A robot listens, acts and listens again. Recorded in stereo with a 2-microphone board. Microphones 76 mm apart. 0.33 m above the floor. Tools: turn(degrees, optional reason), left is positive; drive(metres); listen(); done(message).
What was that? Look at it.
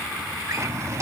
turn(degrees=-45, reason="The drawer: about 45° right or 135° right.")
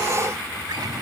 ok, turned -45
listen()
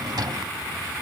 turn(degrees=-80, reason="So it is at 80° right.")
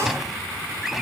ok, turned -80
done("Found it: a drawer, straight ahead.")